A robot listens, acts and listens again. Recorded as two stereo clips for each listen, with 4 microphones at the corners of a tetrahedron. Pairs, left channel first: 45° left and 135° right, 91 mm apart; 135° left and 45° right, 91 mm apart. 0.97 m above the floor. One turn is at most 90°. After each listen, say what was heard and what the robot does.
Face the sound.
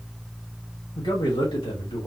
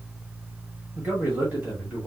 The man speaking: 30° left. Turn 30° left.
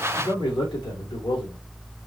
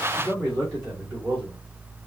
The man speaking is now 15° left. Turn 15° left.
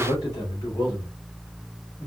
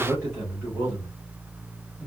The man speaking is now 10° left. Turn 10° left.
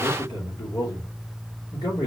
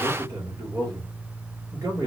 Facing the man speaking.